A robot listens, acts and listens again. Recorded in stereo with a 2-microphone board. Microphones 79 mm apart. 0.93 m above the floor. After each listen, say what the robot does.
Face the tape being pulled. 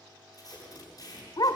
Turn 50° left.
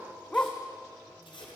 Turn 80° left.
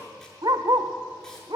Keep listening.
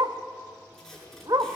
Facing the tape being pulled.